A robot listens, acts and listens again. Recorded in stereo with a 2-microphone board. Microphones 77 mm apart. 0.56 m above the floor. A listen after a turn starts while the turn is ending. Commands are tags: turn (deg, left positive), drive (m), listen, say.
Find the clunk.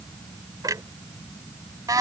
<turn deg="-55"/>
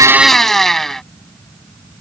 <listen/>
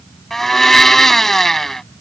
<say>I heard a clunk, but can't make it out now. It was about straight ahead or 70° right.</say>